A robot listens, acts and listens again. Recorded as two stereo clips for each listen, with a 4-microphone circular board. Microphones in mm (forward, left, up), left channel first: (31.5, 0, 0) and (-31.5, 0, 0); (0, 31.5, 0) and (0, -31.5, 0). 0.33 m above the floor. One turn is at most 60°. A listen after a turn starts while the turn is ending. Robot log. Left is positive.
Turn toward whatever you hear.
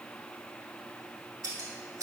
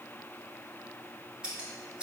note: The scissors: 160° right.
cmd yaw -60
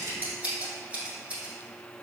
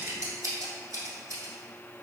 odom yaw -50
note: The scissors is now 115° right.
cmd yaw -60
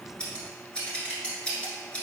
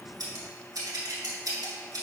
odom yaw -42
note: The scissors is now 70° right.
cmd yaw -60
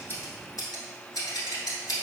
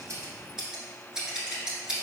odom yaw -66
note: The scissors is now 10° right.
cmd yaw -10
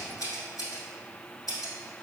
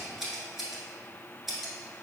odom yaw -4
end: Facing the scissors, under 1 m away.